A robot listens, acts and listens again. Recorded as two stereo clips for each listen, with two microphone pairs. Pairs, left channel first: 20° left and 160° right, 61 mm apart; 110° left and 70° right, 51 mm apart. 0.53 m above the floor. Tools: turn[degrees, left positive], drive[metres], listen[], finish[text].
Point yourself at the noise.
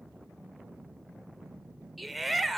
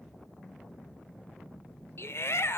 Thought: The shout: 110° left.
Action: turn[110]
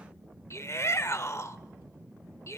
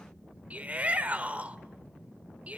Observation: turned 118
Thought: The shout is now 10° right.
Action: turn[-10]
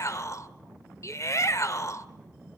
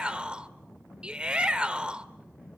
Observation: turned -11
Action: finish[Found it: a shout, straight ahead.]